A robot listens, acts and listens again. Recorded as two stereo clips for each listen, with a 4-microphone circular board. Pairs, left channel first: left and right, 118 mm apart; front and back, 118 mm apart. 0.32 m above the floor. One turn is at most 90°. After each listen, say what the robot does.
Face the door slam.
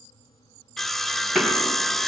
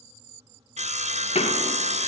Facing the door slam.